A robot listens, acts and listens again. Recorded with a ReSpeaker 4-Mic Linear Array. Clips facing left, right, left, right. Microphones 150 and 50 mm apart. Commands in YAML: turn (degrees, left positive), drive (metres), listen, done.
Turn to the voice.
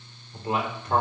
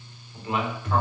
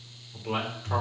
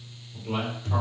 turn: 40
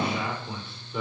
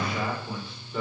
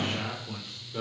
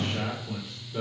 done: "Facing the man speaking, 2 to 4 m away."